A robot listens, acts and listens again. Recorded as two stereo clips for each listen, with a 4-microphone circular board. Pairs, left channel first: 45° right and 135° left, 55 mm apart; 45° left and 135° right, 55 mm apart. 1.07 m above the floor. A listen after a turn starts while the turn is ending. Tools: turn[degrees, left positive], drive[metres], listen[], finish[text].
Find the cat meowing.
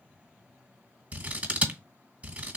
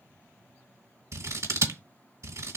Action: listen[]
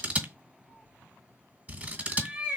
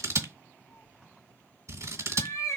Thought: The cat meowing: 65° left.
Action: turn[65]
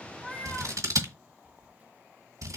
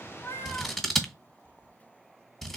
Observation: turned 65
Action: listen[]
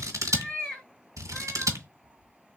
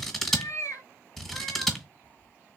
Thought: The cat meowing is now 25° left.
Action: turn[25]
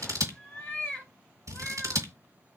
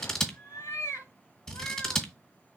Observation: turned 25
Thought: The cat meowing is now 20° left.
Action: turn[20]
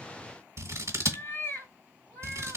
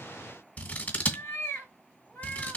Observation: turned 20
Action: finish[Found it: a cat meowing, straight ahead.]